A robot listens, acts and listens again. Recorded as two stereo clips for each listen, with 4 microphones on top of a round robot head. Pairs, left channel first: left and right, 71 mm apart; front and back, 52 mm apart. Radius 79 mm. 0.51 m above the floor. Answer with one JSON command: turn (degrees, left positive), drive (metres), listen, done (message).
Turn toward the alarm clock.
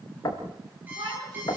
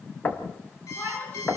{"turn": -25}
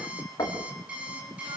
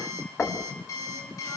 {"turn": -15}
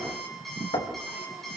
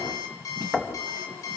{"done": "Found it: an alarm clock, straight ahead."}